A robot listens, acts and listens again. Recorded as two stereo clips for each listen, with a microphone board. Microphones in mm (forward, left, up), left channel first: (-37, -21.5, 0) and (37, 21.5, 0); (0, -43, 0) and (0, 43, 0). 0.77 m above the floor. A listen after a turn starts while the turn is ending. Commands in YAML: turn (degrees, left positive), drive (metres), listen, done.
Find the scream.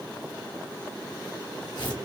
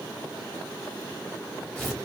listen: true
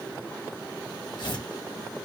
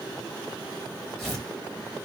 listen: true
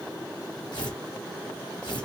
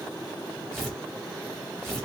done: "I can't make out a scream to turn to."